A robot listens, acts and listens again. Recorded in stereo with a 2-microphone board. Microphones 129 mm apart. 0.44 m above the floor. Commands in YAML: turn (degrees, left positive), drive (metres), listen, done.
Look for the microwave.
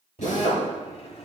turn: 45
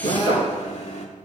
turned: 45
turn: 75
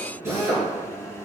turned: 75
turn: 25
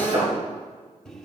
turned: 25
done: "Found it: a microwave, straight ahead, 1 to 2 m away."